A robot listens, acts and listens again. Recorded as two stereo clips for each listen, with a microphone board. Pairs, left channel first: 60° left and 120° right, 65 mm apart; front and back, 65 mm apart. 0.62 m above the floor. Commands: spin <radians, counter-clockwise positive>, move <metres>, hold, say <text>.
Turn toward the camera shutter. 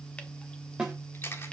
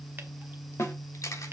spin 0.26
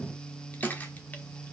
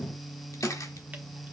say Found it: a camera shutter, straight ahead, 1 to 2 m away.